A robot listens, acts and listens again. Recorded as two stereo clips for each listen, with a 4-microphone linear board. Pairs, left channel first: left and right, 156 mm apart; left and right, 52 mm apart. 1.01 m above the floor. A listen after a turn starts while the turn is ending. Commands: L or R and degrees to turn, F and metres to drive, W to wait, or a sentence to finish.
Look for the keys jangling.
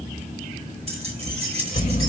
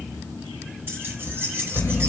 R40
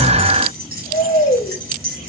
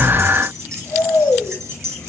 R105
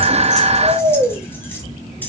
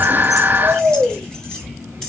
W
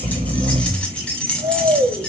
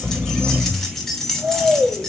Found it: keys jangling, straight ahead, 2 to 4 m away.